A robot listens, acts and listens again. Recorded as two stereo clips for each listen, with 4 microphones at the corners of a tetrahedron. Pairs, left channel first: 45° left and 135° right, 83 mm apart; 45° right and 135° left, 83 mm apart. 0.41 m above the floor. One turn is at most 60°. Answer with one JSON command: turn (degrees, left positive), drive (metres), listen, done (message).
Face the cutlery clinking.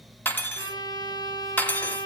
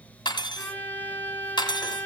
{"turn": -25}
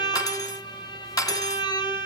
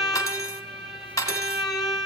{"done": "Found it: cutlery clinking, straight ahead, 1 to 2 m away."}